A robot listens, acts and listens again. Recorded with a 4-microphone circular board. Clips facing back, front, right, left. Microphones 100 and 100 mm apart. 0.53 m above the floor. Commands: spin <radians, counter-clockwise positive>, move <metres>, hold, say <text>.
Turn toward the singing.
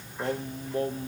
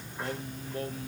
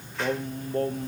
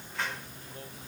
spin -2.18
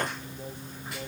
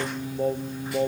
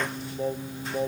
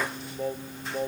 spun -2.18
say Found it: singing, straight ahead.